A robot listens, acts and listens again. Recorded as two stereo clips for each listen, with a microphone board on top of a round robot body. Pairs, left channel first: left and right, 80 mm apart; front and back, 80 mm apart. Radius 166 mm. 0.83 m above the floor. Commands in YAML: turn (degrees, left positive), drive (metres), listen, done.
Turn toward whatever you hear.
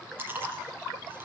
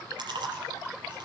turn: -155
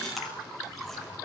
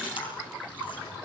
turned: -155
listen: true
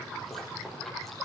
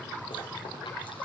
done: "Facing the chewing."